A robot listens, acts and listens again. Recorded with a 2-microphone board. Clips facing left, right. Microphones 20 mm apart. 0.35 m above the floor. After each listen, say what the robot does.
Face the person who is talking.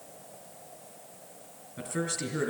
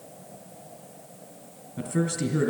Turn 30° left.
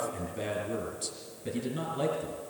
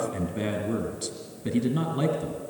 Turn 25° right.
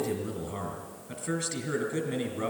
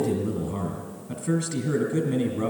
Facing the man speaking, 2 to 4 m away.